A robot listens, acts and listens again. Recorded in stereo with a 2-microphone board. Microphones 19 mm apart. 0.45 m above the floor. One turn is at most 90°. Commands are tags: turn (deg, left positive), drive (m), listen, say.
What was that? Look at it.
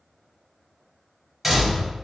<turn deg="-30"/>
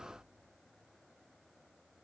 <listen/>
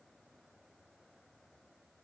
<say>I heard a door slam, but can't make it out now. It was about 15° left or 135° right.</say>